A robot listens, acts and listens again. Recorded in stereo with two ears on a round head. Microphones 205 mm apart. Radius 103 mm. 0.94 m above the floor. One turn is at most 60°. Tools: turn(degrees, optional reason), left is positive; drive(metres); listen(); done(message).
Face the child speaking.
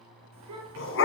turn(degrees=-60)
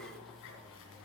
turn(degrees=-30, reason="Nothing new. It was at 30° right.")
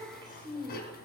turn(degrees=-20, reason="The child speaking is now 20° right.")
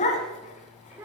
turn(degrees=-10, reason="The child speaking is now 10° right.")
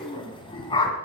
listen()
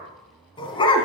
listen()
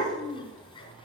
done("Facing the child speaking, 2 to 4 m away.")